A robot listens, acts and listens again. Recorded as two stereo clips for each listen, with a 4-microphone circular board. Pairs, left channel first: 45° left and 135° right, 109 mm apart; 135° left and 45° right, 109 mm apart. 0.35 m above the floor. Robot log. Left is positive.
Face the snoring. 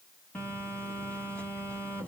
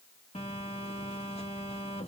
cmd idle
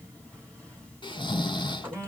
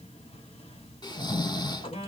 note: The snoring: 85° left.
cmd yaw +85
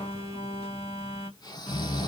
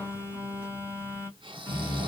end: Found it: snoring, straight ahead.